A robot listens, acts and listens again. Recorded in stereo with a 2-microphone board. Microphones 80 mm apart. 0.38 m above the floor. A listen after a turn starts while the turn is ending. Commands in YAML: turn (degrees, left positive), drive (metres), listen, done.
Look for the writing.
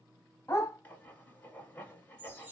turn: 20
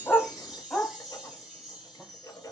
turn: 140
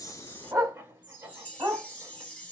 turn: -25
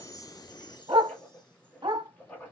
turn: 25
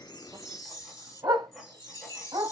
listen: true
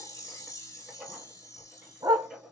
done: "Found it: writing, straight ahead, 1 to 2 m away."